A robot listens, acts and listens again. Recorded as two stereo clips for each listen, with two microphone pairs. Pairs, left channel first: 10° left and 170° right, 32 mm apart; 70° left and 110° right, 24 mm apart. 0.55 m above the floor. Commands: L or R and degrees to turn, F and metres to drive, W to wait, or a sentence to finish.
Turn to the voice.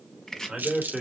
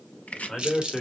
L125
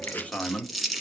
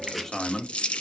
Facing the man speaking, 1 to 2 m away.